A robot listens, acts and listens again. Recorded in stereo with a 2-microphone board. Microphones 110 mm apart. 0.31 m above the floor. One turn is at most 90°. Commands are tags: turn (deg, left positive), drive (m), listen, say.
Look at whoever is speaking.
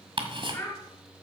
<turn deg="25"/>
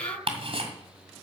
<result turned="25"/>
<listen/>
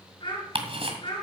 <turn deg="90"/>
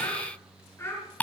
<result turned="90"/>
<turn deg="25"/>
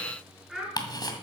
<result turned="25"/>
<say>Found it: a child speaking, straight ahead, 2 to 4 m away.</say>